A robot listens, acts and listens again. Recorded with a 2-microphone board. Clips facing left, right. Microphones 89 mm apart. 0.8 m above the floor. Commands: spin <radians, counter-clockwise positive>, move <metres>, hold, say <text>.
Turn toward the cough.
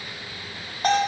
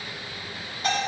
hold
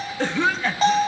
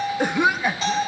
spin -0.52
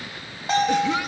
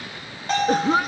spin -2.36
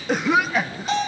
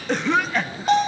say Found it: a cough, straight ahead.